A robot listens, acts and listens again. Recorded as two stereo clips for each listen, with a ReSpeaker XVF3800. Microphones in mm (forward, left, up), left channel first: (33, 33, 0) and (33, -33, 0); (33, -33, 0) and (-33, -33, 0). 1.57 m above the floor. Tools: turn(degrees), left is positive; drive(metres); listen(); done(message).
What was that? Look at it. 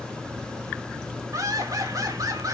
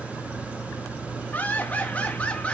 turn(degrees=-70)
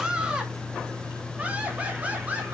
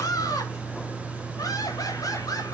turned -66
turn(degrees=-20)
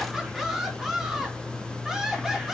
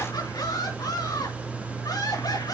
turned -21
done("Found it: laughter, straight ahead, over 4 m away.")